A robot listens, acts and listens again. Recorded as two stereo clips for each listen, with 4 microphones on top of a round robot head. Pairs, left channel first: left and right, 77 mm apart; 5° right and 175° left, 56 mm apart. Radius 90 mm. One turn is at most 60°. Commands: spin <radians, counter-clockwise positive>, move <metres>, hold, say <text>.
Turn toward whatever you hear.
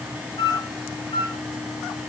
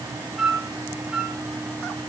spin 1.05
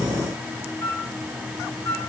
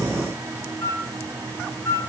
spin 0.61
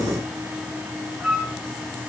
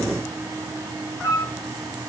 say Found it: a flute, straight ahead.